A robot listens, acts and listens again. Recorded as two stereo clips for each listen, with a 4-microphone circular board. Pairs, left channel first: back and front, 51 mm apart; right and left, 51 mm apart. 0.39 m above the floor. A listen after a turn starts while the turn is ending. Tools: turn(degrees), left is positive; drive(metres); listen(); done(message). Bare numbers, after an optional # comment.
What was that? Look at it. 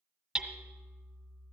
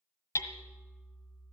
# The hammering: 85° right.
turn(-85)
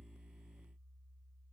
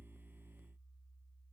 listen()
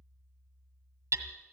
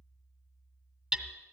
# The hammering is now 10° left.
turn(10)
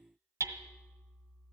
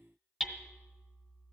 done("Found it: hammering, straight ahead.")